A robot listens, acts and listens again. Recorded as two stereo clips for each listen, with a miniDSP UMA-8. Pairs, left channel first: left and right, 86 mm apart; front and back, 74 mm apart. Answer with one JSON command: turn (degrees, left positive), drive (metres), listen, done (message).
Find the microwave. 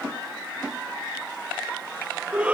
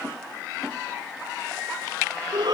{"listen": true}
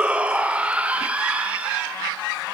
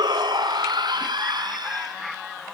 {"listen": true}
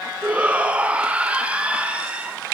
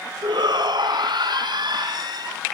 {"done": "I can't make out a microwave to turn to."}